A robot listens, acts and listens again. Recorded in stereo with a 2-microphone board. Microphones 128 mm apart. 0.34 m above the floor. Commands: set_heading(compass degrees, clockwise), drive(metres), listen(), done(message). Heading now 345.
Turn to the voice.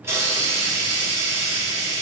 listen()
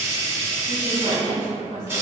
set_heading(35)
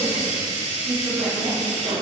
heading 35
set_heading(55)
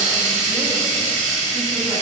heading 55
listen()
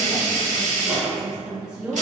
done("Facing the woman speaking, 1 to 2 m away.")